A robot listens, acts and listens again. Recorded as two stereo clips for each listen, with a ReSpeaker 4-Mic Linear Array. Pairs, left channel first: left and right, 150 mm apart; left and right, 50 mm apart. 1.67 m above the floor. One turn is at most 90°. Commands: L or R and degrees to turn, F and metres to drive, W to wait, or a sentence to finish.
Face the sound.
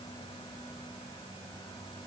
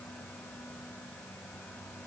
W
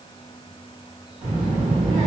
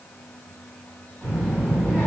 R30
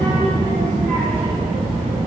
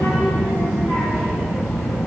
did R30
R90
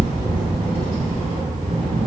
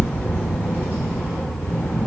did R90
R40
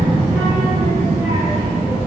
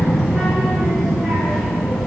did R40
R10
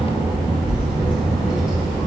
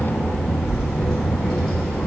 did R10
Found it: a child speaking, straight ahead, 2 to 4 m away.